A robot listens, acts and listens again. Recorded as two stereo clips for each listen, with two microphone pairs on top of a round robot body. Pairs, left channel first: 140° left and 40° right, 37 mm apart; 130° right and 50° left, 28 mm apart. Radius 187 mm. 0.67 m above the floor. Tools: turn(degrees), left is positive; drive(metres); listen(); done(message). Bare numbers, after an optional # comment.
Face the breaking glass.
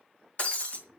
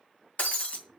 # The breaking glass: 165° right.
turn(-165)
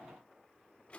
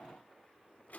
done("Facing where the breaking glass came from. I can't hear it now.")